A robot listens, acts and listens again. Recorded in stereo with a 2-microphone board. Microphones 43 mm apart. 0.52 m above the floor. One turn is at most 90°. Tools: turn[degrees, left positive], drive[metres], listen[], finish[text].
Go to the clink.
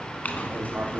Thought: The clink: about 40° left or 140° left.
Action: turn[40]
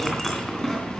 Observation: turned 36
Action: drive[1.0]
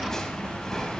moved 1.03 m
Thought: The clink is now 15° left.
Action: turn[15]
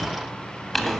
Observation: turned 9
Action: drive[1.0]
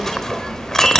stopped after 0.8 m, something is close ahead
Thought: The clink is now 10° left.
Action: turn[10]
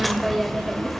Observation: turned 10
Action: finish[Arrived at the clink, straight ahead.]